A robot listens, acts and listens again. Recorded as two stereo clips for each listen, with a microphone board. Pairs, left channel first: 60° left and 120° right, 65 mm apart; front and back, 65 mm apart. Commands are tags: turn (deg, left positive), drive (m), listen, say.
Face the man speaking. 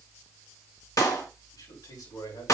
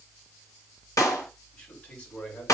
<turn deg="70"/>
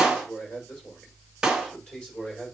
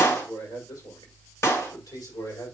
<turn deg="-15"/>
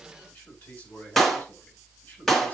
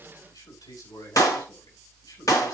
<say>Found it: a man speaking, straight ahead, over 4 m away.</say>